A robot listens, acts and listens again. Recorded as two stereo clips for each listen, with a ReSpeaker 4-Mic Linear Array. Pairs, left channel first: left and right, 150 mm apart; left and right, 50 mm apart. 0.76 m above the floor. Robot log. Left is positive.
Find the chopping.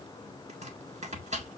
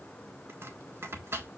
note: The chopping: about 50° right or 130° right.
cmd yaw -50
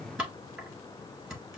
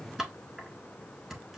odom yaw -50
end: Facing the chopping.